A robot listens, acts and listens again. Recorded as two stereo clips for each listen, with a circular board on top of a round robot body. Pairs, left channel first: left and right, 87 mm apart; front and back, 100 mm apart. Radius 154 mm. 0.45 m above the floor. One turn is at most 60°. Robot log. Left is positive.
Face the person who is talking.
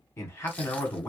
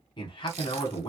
note: The man speaking: 30° left.
cmd yaw +30
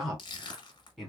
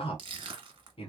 end: Found it: a man speaking, straight ahead.